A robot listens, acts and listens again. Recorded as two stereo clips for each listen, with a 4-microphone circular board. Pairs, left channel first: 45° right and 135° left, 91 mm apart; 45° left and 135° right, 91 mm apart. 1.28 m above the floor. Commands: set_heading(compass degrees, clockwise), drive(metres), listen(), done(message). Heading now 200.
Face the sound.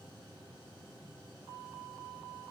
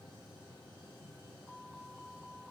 listen()
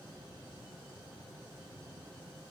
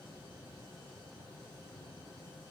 listen()
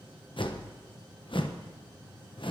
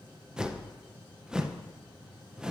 set_heading(255)
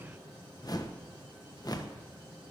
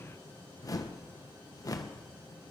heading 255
done("Found it: a whoosh, straight ahead.")